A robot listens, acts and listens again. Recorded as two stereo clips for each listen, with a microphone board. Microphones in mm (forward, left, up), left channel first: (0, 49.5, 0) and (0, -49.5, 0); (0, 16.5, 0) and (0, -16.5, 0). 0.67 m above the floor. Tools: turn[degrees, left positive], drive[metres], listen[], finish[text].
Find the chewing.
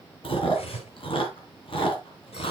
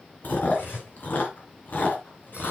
Thought: The chewing: about 60° left or 120° left.
Action: turn[60]
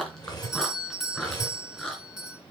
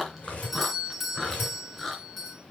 Action: finish[Found it: chewing, straight ahead, 2 to 4 m away.]